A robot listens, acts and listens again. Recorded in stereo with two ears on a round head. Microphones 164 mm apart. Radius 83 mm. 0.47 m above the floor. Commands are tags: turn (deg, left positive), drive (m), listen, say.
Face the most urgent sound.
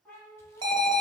<turn deg="-25"/>
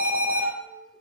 <turn deg="-130"/>
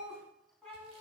<listen/>
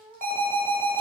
<turn deg="10"/>
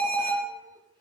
<say>Found it: an alarm, straight ahead, 1 to 2 m away.</say>